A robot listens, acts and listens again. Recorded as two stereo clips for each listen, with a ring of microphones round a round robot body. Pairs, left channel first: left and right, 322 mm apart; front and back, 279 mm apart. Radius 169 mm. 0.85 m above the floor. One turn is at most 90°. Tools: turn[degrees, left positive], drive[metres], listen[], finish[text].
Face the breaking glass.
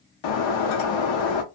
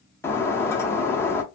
Thought: The breaking glass: 80° left.
Action: turn[80]
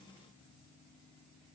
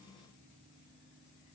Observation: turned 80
Action: finish[I heard breaking glass from this way, but can't make it out now.]